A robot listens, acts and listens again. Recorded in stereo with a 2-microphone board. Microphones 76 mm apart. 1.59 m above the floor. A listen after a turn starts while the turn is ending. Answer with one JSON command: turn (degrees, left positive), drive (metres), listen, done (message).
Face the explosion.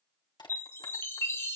{"listen": true}
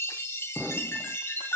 {"turn": 30}
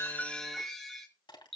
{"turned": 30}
{"listen": true}
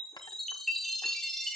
{"done": "I heard an explosion, but can't make it out now. It was about 30° right or 150° left."}